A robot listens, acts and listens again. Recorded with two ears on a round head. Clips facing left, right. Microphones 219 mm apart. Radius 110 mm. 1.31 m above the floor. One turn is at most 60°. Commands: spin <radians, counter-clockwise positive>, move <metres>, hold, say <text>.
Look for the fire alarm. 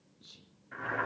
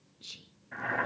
hold
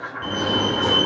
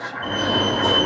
spin 1.05
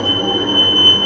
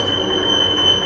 spin 0.87
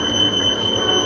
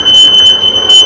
spin -0.17
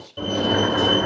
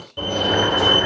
say Found it: a fire alarm, straight ahead.